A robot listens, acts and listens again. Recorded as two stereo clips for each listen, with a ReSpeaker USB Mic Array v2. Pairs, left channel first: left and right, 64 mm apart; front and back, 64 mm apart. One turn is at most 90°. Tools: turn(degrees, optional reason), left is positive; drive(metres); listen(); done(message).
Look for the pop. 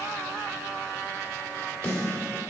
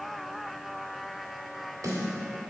listen()
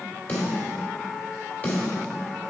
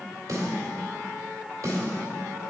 listen()
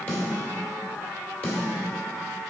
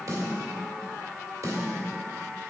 done("I can't make out a pop, only a snare drum.")